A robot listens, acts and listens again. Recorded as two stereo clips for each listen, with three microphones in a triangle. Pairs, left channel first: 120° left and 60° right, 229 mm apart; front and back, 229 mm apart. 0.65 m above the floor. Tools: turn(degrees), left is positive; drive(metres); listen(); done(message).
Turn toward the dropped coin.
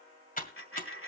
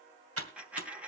turn(degrees=95)
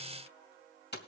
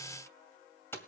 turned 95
done("Facing where the dropped coin came from. I can't hear it now.")